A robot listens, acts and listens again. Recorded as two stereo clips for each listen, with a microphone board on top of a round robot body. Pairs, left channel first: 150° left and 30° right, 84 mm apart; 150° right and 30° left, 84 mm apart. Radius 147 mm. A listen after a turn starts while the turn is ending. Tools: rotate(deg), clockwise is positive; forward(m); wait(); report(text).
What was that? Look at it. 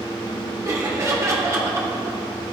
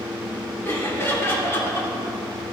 rotate(90)
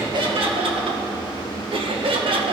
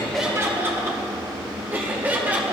rotate(45)
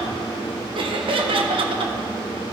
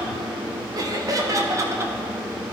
rotate(25)
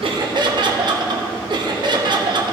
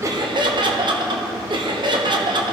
report("Found it: laughter, straight ahead.")